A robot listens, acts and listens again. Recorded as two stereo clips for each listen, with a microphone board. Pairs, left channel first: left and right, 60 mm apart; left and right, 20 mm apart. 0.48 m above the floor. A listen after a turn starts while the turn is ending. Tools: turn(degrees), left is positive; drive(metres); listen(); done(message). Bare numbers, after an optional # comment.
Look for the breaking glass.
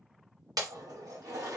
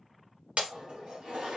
turn(-90)
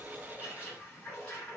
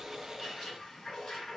done("I heard breaking glass from this way, but can't make it out now.")